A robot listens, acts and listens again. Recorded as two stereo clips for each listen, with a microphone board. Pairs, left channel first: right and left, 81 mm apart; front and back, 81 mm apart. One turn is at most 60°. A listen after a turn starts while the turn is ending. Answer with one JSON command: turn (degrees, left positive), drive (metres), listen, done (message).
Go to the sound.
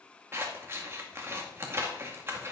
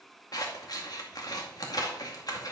{"turn": 35}
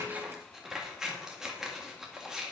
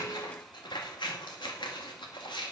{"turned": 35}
{"drive": 1.0}
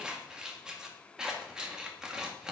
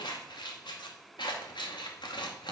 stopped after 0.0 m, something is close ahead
{"turn": 10}
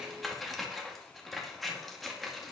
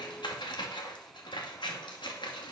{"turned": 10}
{"done": "Blocked. The scissors is further on, straight ahead."}